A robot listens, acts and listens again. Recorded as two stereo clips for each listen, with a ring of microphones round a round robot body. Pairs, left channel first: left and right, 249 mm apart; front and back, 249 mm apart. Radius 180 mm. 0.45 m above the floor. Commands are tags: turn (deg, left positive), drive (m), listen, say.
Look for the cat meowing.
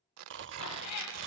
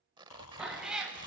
<turn deg="95"/>
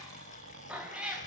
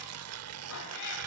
<say>Found it: a cat meowing, straight ahead, over 4 m away.</say>